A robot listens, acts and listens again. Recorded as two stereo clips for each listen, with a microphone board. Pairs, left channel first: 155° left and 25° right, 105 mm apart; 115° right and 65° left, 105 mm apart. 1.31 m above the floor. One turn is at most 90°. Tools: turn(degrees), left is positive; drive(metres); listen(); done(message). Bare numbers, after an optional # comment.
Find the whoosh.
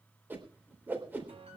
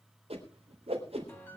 # The whoosh: 50° left.
turn(50)
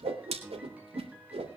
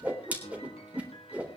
# The whoosh is now 10° right.
turn(-10)
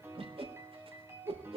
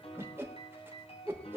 done("Found it: a whoosh, straight ahead.")